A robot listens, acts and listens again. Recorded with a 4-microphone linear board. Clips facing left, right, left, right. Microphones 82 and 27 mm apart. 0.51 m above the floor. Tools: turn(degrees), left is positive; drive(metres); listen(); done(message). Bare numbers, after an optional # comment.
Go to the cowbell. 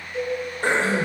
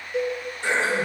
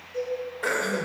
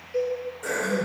turn(-90)
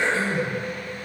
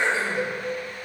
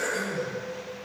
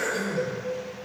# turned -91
listen()
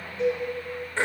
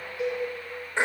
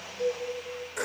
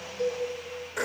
# The cowbell is now 10° right.
turn(-10)
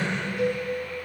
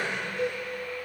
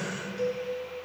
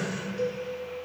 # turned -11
drive(1.0)
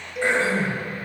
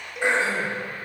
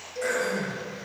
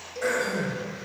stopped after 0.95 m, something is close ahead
done("Arrived at the cowbell, straight ahead.")